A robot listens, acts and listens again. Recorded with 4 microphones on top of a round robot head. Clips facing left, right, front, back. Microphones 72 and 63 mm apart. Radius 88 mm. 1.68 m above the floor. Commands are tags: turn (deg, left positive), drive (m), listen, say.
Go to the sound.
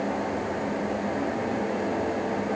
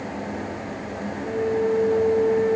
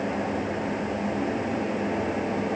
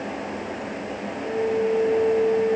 <turn deg="-135"/>
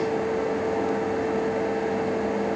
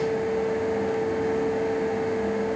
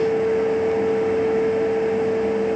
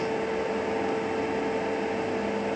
<turn deg="15"/>
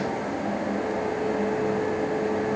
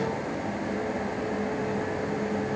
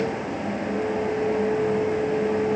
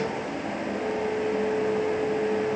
<drive m="1.0"/>
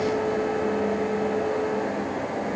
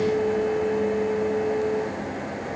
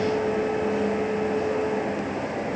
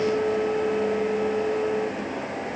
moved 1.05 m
<drive m="1.0"/>
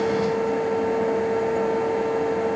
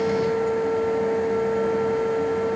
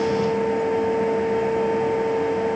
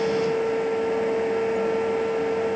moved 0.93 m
<drive m="1.0"/>
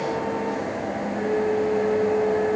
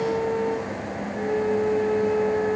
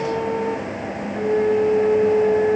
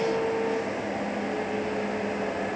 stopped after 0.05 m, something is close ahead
<say>I am next to the flute.</say>